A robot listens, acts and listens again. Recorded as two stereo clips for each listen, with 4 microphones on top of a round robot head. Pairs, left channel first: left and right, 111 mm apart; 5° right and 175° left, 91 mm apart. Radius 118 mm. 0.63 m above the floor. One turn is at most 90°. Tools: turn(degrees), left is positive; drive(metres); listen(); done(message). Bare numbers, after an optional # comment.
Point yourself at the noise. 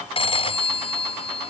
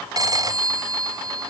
# The phone ringing: 125° left.
turn(90)
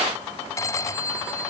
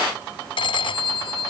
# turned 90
# The phone ringing is now 25° left.
turn(25)
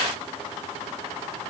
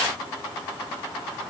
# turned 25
listen()
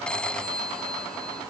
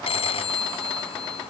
done("Found it: a phone ringing, straight ahead.")